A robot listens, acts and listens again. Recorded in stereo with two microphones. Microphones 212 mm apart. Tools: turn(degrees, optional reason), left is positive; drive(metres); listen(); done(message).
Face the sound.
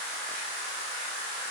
listen()
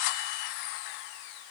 listen()
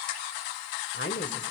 turn(degrees=60, reason="The woman speaking: about 60° left or 120° left.")
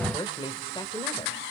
turn(degrees=25, reason="So it is at 25° left.")
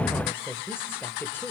turn(degrees=10, reason="The woman speaking is now 10° left.")
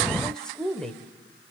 done("Found it: a woman speaking, straight ahead, 1 to 2 m away.")